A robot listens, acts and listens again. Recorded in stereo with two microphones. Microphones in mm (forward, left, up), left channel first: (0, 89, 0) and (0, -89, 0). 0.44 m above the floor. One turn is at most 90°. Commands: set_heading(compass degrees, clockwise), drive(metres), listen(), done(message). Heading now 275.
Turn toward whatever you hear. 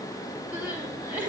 set_heading(305)
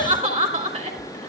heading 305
set_heading(35)
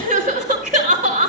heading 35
set_heading(85)
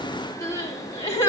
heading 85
set_heading(70)
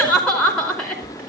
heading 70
done("Found it: crying, straight ahead, over 4 m away.")